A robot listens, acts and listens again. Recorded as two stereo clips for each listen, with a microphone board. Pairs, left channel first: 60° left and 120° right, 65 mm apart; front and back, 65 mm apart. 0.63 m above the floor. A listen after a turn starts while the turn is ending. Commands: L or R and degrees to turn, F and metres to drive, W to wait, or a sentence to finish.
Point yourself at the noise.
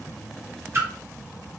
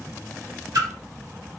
R170
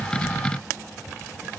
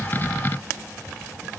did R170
Facing where the splash came from. I can't hear it now.